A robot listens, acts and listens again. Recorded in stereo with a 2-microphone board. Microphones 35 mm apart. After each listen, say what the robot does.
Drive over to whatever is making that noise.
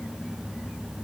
Keep listening.
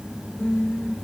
Turn 55° left.
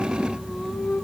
Turn 10° left.
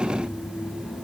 Keep listening.
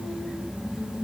Drive 1.0 m forward.
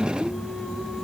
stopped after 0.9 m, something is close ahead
Arrived at the singing, straight ahead.